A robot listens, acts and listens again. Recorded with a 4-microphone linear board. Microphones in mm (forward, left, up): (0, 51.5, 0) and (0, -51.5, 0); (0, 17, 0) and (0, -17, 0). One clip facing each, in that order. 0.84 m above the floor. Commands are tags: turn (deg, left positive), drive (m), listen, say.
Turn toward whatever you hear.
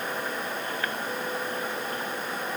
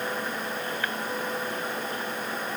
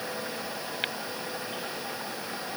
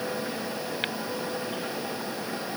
<listen/>
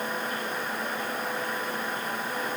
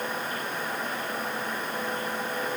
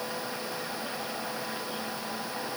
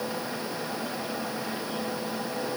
<listen/>
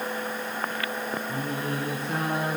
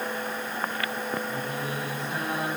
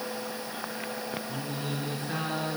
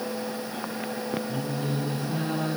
<turn deg="60"/>
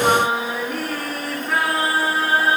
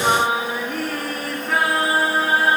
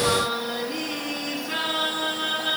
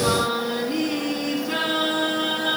<say>Found it: singing, straight ahead.</say>